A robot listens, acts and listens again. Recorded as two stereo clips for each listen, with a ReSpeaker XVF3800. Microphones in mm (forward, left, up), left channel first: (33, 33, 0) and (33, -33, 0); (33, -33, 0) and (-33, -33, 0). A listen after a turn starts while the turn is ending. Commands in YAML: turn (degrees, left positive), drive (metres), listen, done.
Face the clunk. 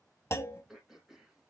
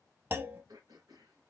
turn: 130
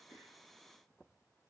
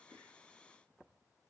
done: "I heard a clunk from this way, but can't make it out now."